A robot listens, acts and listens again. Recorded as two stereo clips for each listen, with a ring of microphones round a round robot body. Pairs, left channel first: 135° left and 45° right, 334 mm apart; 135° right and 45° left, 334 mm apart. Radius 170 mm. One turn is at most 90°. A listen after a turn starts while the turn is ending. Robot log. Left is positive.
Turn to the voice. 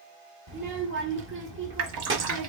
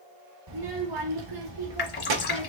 note: The child speaking: 15° left.
cmd yaw +15
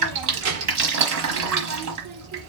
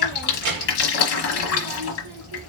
end: Facing the child speaking.